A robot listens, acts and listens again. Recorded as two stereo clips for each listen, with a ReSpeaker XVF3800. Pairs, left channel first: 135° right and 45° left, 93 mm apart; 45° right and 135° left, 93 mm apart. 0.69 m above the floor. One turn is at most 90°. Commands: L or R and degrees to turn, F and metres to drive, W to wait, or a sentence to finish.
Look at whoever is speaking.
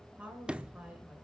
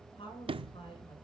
R30
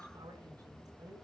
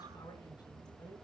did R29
Facing the woman speaking, over 4 m away.